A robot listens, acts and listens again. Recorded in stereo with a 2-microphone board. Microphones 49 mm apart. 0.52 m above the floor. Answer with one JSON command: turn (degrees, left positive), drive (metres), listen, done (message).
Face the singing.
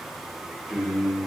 {"turn": -30}
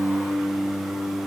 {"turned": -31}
{"turn": -130}
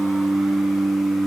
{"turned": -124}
{"turn": 55}
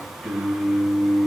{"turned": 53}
{"turn": 20}
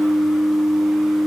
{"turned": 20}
{"done": "Found it: singing, straight ahead."}